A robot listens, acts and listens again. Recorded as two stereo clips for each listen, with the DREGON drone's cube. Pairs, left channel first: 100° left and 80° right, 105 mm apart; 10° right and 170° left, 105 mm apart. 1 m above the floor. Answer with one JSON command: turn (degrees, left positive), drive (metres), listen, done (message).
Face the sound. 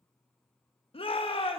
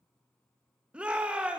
{"turn": 90}
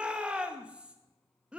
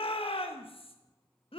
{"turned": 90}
{"done": "Found it: a shout, straight ahead, 1 to 2 m away."}